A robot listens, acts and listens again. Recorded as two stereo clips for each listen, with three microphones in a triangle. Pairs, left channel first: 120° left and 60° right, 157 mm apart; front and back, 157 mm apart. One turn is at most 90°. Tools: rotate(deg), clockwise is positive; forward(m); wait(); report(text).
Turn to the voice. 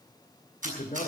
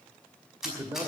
rotate(-90)
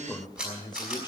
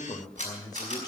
rotate(-60)
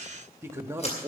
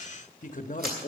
rotate(-10)
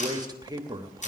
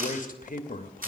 report("Found it: a man speaking, straight ahead, 1 to 2 m away.")